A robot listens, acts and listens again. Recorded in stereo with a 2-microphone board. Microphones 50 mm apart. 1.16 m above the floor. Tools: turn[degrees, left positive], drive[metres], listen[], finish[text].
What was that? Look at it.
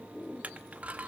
Thought: The crushing: about 30° right or 150° right.
Action: turn[-30]
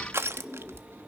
Thought: So it is at 120° right.
Action: turn[-120]
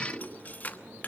Thought: The crushing is now 35° left.
Action: turn[35]
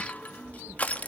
Thought: The crushing is now 30° left.
Action: turn[30]
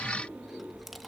Action: finish[Facing the crushing.]